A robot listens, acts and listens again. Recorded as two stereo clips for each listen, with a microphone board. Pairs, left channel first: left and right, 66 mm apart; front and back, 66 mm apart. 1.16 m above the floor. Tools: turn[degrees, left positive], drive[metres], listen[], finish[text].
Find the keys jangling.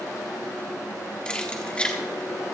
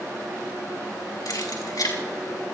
Thought: The keys jangling: 20° left.
Action: turn[20]
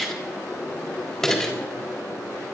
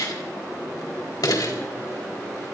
Thought: The keys jangling is now 10° left.
Action: turn[10]
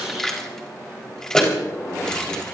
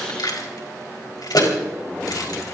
Thought: The keys jangling is now 10° left.
Action: turn[10]
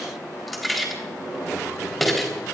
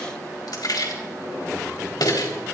Action: finish[Found it: keys jangling, straight ahead, over 4 m away.]